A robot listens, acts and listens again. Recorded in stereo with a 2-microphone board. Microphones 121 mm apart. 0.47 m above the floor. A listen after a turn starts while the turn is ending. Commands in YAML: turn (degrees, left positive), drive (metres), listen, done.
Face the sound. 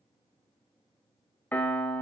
turn: 30
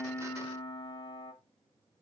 turn: 135
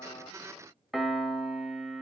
done: "Found it: a piano, straight ahead, 1 to 2 m away."